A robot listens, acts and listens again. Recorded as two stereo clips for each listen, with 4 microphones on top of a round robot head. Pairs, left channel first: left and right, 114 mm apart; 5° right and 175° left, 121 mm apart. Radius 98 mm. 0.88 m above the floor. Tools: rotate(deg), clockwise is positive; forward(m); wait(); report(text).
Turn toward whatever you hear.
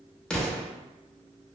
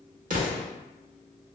rotate(-175)
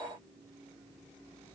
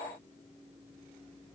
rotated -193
rotate(20)
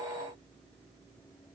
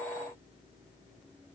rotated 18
report("I heard an explosion from this way, but can't make it out now.")